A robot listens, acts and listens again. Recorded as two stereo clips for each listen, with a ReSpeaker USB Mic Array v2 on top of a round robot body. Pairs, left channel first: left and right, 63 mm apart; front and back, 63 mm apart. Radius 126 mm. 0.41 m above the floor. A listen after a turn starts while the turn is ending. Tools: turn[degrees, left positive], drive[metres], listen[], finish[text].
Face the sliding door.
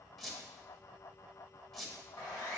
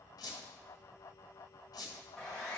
Action: listen[]
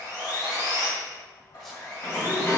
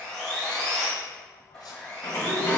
Thought: The sliding door: 45° left.
Action: turn[45]
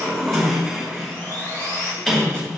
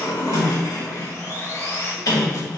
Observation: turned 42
Action: finish[Facing the sliding door.]